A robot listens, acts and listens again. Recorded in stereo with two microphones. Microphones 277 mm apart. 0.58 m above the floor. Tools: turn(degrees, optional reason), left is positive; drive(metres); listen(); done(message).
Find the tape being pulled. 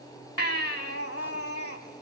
listen()
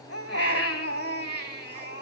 listen()
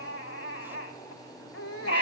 done("I can't make out tape being pulled to turn to.")